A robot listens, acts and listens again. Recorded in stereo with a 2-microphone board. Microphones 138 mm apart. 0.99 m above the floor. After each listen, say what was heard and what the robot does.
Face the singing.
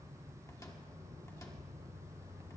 Keep listening.
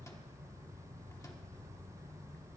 Keep listening.
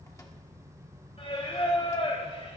The singing: about 45° left or 135° left. Turn 45° left.
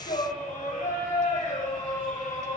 So it is at 95° left. Turn 95° left.
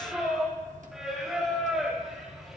Found it: singing, straight ahead.